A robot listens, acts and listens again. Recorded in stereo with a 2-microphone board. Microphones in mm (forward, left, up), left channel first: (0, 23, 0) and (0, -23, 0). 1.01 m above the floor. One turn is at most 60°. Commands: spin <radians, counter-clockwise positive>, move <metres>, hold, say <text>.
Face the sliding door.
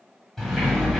spin 0.52
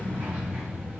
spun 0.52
spin -0.44
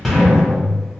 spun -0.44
say Facing the sliding door.